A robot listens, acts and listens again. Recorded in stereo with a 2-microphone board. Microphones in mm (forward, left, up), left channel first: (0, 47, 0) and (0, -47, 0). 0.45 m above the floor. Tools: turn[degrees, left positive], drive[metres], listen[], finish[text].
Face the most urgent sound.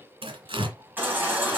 Thought: The baby crying: about 20° right or 160° right.
Action: turn[-20]
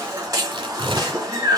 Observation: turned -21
Thought: So it is at 135° right.
Action: turn[-135]
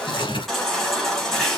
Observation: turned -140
Action: finish[Facing the baby crying, 2 to 4 m away.]